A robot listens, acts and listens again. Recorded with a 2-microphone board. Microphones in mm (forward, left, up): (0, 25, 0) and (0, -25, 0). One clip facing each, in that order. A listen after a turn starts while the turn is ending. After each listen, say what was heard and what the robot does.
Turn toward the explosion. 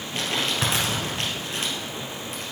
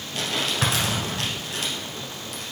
The explosion: about 15° right or 165° right. Turn 15° right.
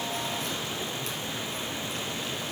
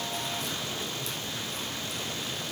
Keep listening.
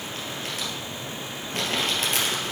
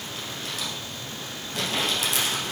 I heard an explosion, but can't make it out now. It was about straight ahead or 150° right.